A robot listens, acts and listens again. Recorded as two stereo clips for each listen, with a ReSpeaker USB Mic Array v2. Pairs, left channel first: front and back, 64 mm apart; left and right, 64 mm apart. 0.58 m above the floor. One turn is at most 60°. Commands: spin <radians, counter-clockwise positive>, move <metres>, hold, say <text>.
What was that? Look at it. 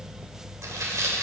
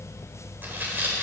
spin -1.05
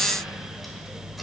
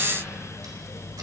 spin -1.05
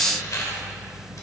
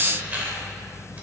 spin -0.44
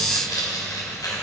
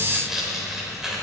say Found it: tearing paper, straight ahead.